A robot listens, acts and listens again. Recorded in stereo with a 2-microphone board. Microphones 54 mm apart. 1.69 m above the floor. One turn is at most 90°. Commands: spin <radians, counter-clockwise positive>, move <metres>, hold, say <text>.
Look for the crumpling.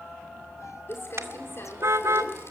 spin 0.87
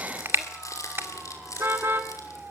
spin 1.48
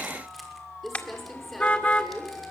say Found it: crumpling, straight ahead.